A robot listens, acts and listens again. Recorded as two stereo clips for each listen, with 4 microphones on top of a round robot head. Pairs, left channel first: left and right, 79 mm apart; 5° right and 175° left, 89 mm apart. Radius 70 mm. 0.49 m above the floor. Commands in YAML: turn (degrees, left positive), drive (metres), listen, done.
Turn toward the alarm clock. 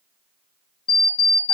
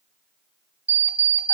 turn: 100
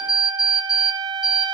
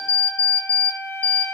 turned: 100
done: "Found it: an alarm clock, straight ahead."